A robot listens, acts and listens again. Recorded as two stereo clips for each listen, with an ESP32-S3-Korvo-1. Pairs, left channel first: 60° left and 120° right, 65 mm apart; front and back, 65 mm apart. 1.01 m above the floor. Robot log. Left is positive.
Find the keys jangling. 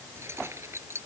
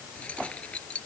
note: The keys jangling: 70° right.
cmd yaw -70
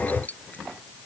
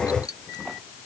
end: Facing the keys jangling.